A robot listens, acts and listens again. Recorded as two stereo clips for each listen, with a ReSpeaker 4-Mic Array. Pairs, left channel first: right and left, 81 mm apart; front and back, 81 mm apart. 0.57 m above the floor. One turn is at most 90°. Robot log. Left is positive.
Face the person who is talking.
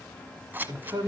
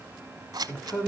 note: The man speaking: 50° left.
cmd yaw +50
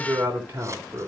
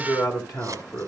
note: The man speaking is now 30° left.
cmd yaw +30
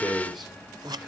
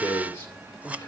end: Found it: a man speaking, straight ahead.